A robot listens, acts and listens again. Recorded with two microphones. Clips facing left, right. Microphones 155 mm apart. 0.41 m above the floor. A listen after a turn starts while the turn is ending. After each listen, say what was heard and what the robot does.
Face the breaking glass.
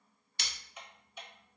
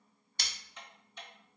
The breaking glass: about 40° right or 140° right. Turn 40° right.
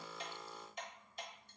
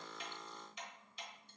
Keep listening.
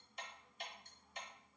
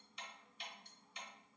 I heard breaking glass, but can't make it out now. It was about straight ahead or 100° right.